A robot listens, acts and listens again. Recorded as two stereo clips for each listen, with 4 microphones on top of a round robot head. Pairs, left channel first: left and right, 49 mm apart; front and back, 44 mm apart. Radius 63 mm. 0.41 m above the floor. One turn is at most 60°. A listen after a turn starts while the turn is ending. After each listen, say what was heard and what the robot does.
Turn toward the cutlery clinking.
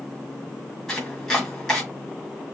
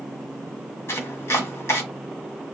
Keep listening.
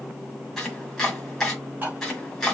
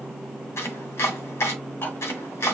The cutlery clinking: 35° right. Turn 35° right.
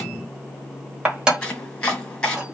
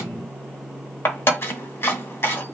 The cutlery clinking is now 20° right. Turn 20° right.
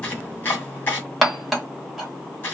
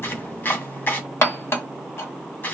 Facing the cutlery clinking, 1 to 2 m away.